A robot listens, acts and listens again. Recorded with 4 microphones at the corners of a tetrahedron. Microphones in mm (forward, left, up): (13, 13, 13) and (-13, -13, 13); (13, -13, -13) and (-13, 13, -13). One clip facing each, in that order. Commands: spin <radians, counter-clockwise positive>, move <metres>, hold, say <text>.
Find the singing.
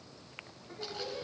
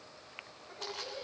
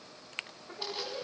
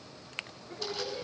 spin -0.96
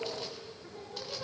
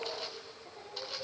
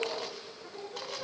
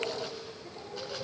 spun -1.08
spin 0.17
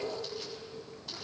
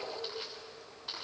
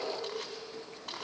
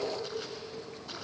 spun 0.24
say Found it: singing, straight ahead.